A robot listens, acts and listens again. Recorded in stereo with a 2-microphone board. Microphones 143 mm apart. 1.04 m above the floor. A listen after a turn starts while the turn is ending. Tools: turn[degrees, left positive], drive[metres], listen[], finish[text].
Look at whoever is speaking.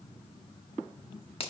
Action: listen[]
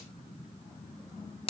Action: listen[]
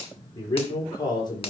Thought: The man speaking: about 35° left or 145° left.
Action: turn[35]
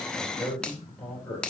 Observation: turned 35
Action: finish[Facing the man speaking.]